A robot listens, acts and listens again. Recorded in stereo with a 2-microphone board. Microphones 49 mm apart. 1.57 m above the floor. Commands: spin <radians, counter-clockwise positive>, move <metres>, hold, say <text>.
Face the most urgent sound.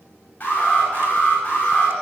spin 0.52
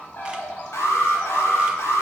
spin 2.09
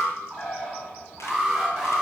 say Facing the alarm, over 4 m away.